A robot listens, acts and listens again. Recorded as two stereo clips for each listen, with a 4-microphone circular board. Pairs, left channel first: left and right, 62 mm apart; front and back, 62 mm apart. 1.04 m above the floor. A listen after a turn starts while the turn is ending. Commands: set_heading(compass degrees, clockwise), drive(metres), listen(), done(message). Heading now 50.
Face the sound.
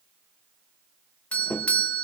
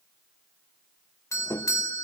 set_heading(25)
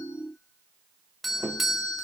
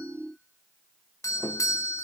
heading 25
done("Facing the doorbell.")